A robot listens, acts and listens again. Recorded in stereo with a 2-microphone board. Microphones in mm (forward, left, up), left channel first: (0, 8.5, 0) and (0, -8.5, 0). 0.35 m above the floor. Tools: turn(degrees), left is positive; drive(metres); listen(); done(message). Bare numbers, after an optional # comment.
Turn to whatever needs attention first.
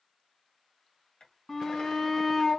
# The shout: about 35° left or 145° left.
turn(35)
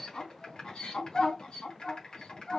# So it is at 105° left.
turn(105)
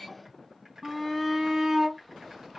done("Found it: a shout, straight ahead.")